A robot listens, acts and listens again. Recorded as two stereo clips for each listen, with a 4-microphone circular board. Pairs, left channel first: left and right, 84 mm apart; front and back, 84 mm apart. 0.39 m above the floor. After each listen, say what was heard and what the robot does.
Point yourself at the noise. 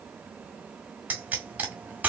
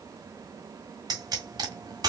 The pop: 160° right. Turn 160° right.
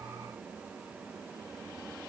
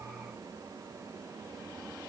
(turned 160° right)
I heard a pop from this way, but can't make it out now.